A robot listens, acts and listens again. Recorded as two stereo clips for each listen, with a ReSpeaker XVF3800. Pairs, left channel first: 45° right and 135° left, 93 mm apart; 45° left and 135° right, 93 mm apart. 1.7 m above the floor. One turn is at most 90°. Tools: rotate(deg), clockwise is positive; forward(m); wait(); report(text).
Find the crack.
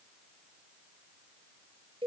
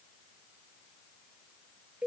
wait()
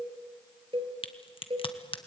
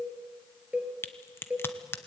rotate(20)
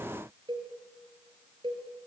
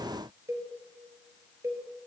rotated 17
report("I heard a crack from this way, but can't make it out now.")